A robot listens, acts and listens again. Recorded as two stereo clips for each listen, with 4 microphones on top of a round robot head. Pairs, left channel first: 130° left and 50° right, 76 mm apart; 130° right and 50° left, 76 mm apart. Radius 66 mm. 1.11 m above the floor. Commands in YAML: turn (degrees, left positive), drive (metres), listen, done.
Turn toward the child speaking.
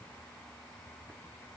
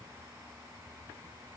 listen: true
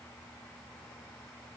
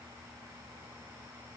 listen: true
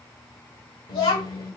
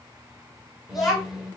turn: 140
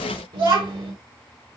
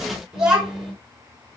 turn: -30
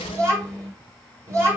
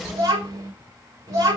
done: "Found it: a child speaking, straight ahead."